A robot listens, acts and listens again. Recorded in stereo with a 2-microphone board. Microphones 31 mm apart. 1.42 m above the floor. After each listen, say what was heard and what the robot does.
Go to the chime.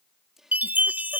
The chime: about 70° right or 110° right. Turn 70° right.
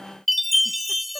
Drive 1.0 m forward.
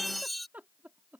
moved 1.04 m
Drive 1.0 m forward.
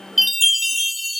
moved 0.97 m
Drive 1.0 m forward.
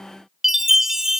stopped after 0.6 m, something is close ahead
The chime is now 15° right. Turn 15° right.
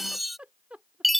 Arrived at the chime, straight ahead.